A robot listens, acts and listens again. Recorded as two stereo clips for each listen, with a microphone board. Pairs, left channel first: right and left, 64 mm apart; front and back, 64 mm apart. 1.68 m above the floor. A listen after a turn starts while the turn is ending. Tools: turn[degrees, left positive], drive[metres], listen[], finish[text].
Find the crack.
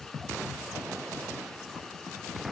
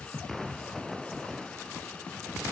Action: listen[]
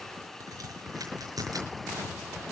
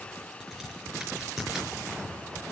Thought: The crack: 95° left.
Action: turn[95]
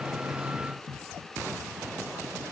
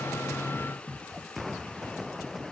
Action: finish[Facing where the crack came from. I can't hear it now.]